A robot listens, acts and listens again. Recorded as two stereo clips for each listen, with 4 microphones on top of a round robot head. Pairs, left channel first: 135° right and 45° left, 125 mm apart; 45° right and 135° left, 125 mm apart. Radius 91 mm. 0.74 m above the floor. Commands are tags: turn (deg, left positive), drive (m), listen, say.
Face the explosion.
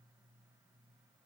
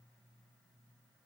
<listen/>
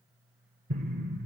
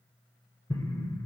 <turn deg="20"/>
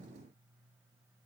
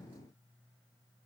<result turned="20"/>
<say>I heard an explosion from this way, but can't make it out now.</say>